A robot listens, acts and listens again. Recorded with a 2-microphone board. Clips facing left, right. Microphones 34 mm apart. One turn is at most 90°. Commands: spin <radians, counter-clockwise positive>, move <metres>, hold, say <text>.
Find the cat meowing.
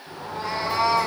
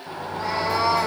spin -0.52
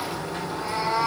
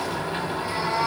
spin 0.35
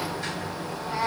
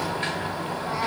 say Found it: a cat meowing, straight ahead, 2 to 4 m away.